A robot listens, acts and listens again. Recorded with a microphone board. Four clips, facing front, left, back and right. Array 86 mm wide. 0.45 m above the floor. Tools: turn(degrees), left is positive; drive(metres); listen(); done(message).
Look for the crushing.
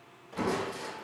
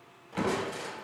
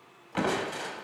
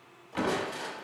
turn(degrees=-175)
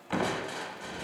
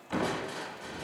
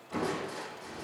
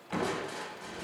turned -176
done("Facing the crushing, under 1 m away.")